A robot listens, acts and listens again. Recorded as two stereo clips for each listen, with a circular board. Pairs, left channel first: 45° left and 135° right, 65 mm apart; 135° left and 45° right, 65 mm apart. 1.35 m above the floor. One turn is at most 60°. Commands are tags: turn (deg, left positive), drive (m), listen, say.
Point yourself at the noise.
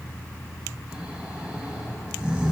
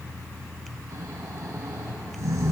<turn deg="-60"/>
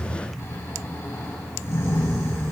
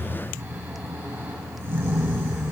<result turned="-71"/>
<say>Facing the snoring, over 4 m away.</say>